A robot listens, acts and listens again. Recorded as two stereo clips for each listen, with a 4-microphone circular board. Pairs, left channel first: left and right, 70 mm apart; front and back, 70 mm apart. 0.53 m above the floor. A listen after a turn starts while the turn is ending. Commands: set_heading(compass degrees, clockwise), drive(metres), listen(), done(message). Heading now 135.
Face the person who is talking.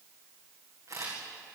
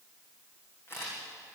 listen()
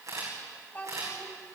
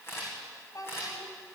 set_heading(110)
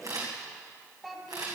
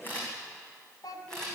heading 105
done("Facing the child speaking.")